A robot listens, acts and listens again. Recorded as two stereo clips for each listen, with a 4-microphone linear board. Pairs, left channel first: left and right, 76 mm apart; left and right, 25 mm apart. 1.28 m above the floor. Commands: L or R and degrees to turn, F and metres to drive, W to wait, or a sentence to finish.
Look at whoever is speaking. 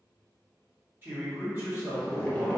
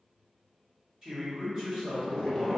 R25
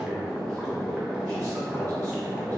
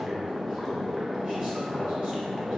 W
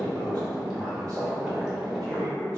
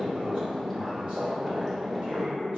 W
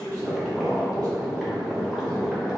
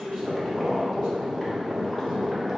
R130
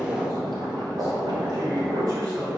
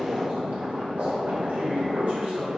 R50
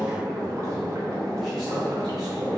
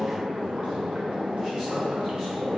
W
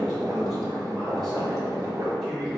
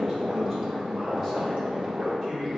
W
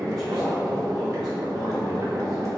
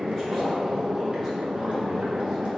I heard a man speaking from this way, but can't make it out now.